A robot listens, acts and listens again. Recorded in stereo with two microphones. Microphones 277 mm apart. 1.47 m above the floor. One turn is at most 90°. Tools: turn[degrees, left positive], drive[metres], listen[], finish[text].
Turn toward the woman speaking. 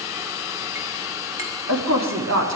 Thought: The woman speaking: about 70° right or 110° right.
Action: turn[-70]
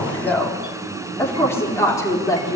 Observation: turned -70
Thought: So it is at 15° left.
Action: turn[15]
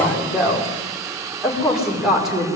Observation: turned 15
Action: finish[Facing the woman speaking.]